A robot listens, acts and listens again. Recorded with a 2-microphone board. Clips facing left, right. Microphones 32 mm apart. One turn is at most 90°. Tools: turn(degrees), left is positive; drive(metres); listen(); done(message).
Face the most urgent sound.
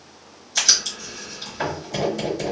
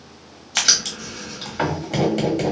listen()
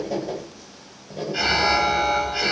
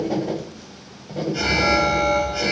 turn(degrees=30)
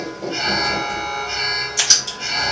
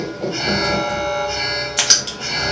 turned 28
done("Found it: an alarm, straight ahead, 1 to 2 m away.")